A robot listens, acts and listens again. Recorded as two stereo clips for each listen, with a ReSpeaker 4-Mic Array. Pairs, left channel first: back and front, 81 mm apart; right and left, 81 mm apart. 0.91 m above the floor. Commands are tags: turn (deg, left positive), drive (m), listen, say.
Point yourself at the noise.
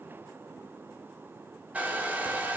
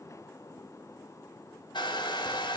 <turn deg="-70"/>
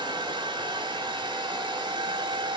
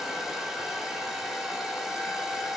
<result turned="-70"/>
<say>Found it: a hair dryer, straight ahead.</say>